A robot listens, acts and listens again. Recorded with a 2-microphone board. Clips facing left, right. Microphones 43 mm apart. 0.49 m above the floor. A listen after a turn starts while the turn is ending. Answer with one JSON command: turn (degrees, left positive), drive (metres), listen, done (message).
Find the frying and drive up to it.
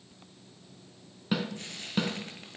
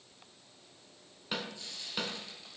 {"turn": 50}
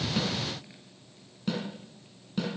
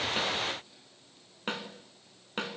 {"listen": true}
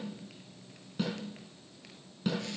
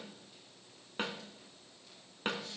{"listen": true}
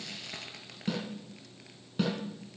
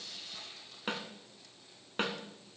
{"turn": 80}
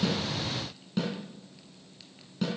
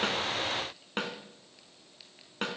{"listen": true}
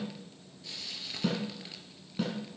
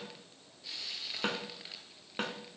{"drive": 1.0}
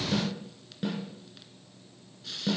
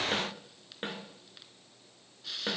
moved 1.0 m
{"drive": 1.0}
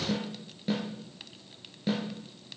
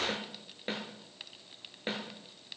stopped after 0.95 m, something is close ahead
{"done": "Arrived at the frying, straight ahead."}